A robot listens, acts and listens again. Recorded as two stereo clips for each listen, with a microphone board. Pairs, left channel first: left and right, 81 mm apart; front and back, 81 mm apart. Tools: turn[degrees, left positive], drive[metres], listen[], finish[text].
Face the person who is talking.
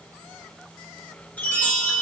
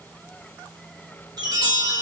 Action: listen[]
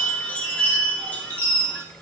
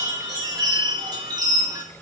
Action: listen[]
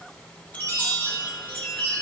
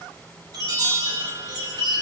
Action: finish[I can't make out anyone speaking, only a chime.]